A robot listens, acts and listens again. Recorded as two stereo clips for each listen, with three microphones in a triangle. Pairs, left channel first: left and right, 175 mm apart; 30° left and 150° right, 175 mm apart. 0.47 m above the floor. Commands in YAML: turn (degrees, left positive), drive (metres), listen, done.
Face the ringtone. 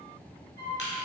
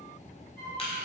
listen: true
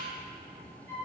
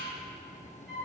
listen: true
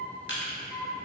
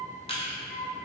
done: "I can't make out a ringtone to turn to."